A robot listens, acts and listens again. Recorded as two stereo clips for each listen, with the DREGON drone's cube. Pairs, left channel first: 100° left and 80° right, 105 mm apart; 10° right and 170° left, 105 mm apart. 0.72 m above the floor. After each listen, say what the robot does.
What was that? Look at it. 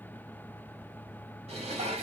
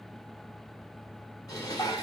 Turn 65° right.
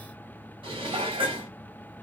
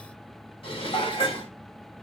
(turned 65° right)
Turn 45° right.
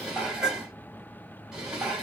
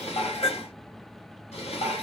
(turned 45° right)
Found it: dishes clattering, straight ahead, 1 to 2 m away.